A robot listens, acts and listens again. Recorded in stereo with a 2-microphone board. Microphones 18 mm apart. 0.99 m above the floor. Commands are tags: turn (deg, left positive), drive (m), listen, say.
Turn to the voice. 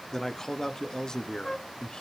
<turn deg="50"/>
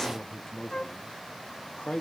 <turn deg="50"/>
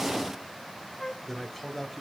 <say>Facing the man speaking, 2 to 4 m away.</say>